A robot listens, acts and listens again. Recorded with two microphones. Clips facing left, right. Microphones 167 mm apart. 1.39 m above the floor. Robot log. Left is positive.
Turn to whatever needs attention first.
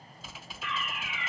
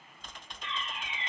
note: The fire alarm: about 30° right or 150° right.
cmd yaw -30
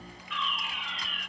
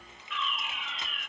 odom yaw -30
end: Facing the fire alarm.